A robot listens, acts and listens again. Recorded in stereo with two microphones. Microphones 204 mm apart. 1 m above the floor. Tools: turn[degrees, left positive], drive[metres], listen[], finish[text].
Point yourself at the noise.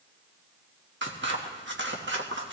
Thought: The scissors: about 65° right or 115° right.
Action: turn[-65]
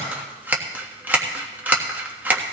Thought: So it is at 10° right.
Action: turn[-10]
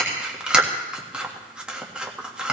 Action: finish[Found it: scissors, straight ahead, 1 to 2 m away.]